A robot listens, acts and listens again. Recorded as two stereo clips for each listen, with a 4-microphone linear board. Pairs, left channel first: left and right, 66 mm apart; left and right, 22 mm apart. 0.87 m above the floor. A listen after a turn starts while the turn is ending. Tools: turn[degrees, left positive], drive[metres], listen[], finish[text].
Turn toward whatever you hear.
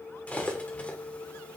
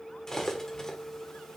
Thought: The cutlery clinking: about 25° left or 155° left.
Action: turn[25]
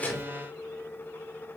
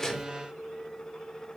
Action: listen[]
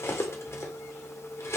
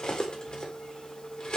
Thought: So it is at 135° left.
Action: turn[135]
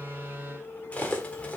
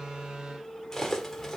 Thought: The cutlery clinking is now 20° left.
Action: turn[20]
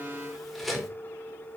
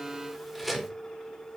Action: finish[Found it: cutlery clinking, straight ahead.]